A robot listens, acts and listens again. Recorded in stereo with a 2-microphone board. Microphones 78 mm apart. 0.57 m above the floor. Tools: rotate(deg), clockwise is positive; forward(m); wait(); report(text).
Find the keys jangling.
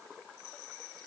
wait()
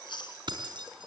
rotate(70)
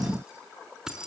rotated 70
rotate(10)
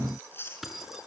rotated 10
report("Facing the keys jangling, over 4 m away.")